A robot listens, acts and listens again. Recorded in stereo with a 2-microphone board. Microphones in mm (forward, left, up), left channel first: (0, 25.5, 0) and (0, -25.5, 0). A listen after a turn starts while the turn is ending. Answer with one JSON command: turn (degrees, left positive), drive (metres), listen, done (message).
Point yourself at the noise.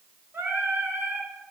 {"turn": -55}
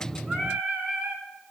{"turn": -25}
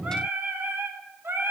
{"turn": -55}
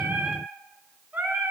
{"turn": -40}
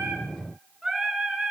{"done": "Facing the singing."}